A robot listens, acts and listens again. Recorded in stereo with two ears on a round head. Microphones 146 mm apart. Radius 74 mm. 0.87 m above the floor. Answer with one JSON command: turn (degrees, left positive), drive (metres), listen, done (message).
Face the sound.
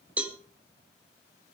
{"turn": -30}
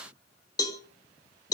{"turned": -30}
{"turn": 20}
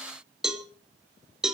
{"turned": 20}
{"done": "Found it: a cowbell, straight ahead."}